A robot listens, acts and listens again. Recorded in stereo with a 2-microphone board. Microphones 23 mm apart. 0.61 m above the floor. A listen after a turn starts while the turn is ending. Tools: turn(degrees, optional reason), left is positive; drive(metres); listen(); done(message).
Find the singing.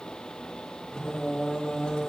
turn(degrees=55, reason="The singing: about 55° left or 125° left.")
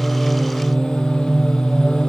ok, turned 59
turn(degrees=45, reason="So it is at 45° left.")
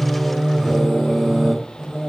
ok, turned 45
turn(degrees=-30, reason="The singing is now 30° right.")
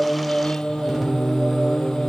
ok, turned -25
turn(degrees=-10, reason="The singing is now 10° right.")
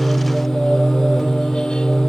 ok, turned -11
done("Found it: singing, straight ahead, 2 to 4 m away.")